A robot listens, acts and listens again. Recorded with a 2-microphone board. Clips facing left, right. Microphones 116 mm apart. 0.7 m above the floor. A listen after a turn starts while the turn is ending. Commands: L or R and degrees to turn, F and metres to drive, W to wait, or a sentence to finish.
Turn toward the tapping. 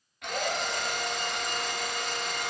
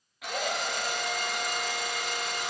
W
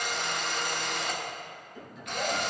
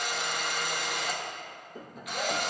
R45
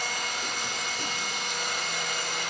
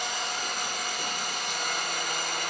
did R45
W
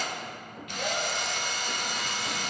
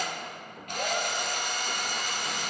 Found it: tapping, straight ahead, under 1 m away.